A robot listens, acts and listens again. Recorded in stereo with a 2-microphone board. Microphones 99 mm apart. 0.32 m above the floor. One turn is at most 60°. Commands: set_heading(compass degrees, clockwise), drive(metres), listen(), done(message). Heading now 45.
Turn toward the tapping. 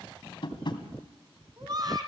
set_heading(350)
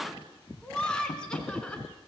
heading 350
set_heading(290)
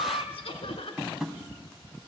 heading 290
done("Found it: tapping, straight ahead.")